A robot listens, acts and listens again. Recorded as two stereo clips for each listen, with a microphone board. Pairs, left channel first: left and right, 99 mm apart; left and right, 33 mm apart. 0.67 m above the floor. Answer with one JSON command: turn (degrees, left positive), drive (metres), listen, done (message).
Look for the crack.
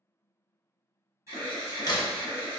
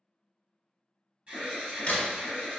{"turn": 45}
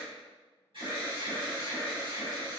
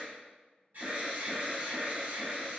{"listen": true}
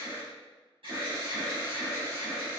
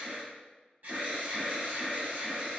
{"done": "I heard a crack, but can't make it out now. It was about straight ahead or 90° left."}